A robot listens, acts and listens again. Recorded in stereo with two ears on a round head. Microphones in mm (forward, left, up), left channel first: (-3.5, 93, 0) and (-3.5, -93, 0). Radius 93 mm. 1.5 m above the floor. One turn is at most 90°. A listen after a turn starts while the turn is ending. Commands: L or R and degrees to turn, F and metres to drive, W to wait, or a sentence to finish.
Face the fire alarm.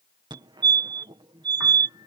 R20
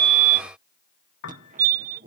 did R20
R90
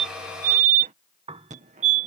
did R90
R40
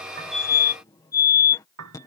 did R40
L20
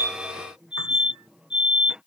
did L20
Facing the fire alarm.